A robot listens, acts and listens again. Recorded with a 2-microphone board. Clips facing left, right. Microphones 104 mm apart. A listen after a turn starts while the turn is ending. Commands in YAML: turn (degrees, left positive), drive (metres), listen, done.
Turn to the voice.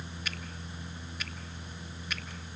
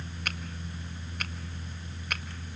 listen: true
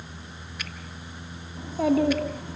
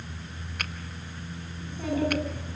turn: 90
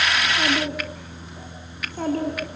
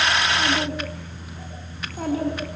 done: "Facing the child speaking, over 4 m away."